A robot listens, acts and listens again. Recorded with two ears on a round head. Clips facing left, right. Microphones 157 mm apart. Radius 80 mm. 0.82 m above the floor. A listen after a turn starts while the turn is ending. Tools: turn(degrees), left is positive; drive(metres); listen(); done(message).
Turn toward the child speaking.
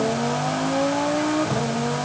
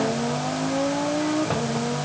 listen()
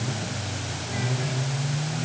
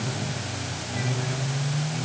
listen()
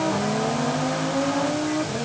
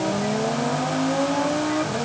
done("I can't make out a child speaking.")